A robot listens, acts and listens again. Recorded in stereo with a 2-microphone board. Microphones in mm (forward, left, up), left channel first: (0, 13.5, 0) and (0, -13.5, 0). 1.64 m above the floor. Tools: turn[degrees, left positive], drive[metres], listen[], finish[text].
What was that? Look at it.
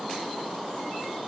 Action: listen[]
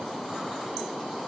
Action: listen[]
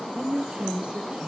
Thought: The woman speaking: about 40° right or 140° right.
Action: turn[-40]
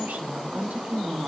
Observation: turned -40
Thought: So it is at 100° right.
Action: turn[-100]
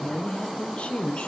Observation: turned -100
Thought: The woman speaking is now 50° left.
Action: turn[50]
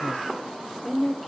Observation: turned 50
Action: finish[Facing the woman speaking, 1 to 2 m away.]